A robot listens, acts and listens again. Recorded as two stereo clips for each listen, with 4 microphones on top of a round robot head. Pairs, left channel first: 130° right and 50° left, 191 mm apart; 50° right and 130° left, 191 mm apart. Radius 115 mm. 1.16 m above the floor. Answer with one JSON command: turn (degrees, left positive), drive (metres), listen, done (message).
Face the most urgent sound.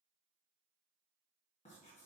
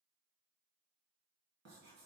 {"listen": true}
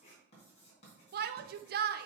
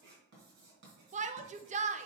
{"turn": 80}
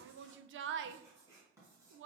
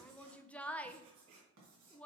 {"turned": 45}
{"turn": 35}
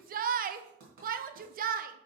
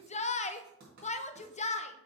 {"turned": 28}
{"done": "Facing the shout."}